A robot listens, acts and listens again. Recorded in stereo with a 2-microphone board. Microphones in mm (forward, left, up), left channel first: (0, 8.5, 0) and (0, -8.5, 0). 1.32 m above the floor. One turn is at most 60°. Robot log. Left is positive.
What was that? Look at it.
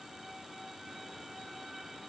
cmd idle
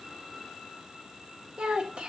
note: The child speaking: about 70° right or 110° right.
cmd yaw -60
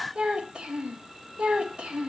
note: So it is at 85° right.
cmd yaw -60
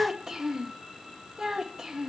note: The child speaking is now 40° right.
cmd yaw -40
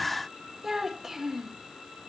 note: The child speaking is now 25° right.
cmd yaw -25
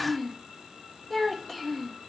note: The child speaking is now 10° left.
cmd yaw +10
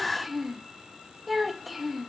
end: Found it: a child speaking, straight ahead.